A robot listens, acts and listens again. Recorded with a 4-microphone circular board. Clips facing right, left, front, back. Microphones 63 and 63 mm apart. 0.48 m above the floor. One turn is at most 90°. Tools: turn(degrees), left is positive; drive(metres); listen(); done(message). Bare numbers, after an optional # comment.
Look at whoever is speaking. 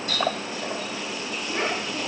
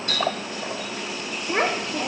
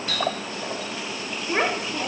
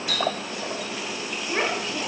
# The child speaking: 65° left.
turn(65)
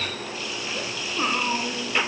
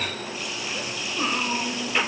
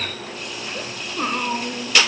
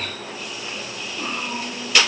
# The child speaking is now 15° right.
turn(-15)
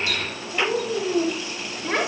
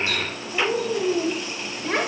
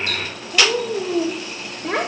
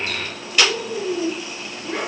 done("Found it: a child speaking, straight ahead, 1 to 2 m away.")